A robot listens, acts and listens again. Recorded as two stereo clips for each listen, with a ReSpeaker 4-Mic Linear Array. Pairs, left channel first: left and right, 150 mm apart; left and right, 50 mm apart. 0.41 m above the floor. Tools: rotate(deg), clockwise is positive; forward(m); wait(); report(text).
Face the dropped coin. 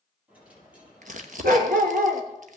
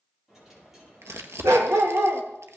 rotate(30)
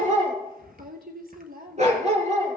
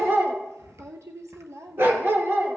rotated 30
wait()
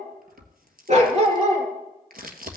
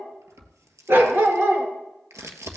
report("I heard a dropped coin, but can't make it out now. It was about 20° left or 140° right.")